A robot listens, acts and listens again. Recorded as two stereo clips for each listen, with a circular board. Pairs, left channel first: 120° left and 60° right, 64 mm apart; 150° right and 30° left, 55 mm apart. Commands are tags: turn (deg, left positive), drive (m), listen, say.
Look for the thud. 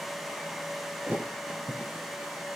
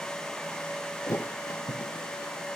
<turn deg="-120"/>
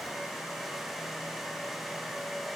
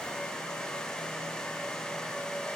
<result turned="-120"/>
<say>I heard a thud from this way, but can't make it out now.</say>